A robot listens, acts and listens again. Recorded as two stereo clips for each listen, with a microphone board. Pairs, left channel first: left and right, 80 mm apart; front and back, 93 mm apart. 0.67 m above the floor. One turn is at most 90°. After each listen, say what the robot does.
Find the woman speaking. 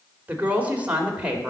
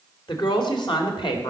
Turn 15° right.
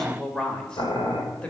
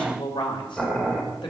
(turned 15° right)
Turn 15° left.
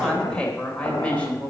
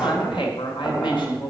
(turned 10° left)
Turn 20° left.
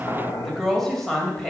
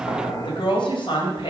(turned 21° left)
Facing the woman speaking.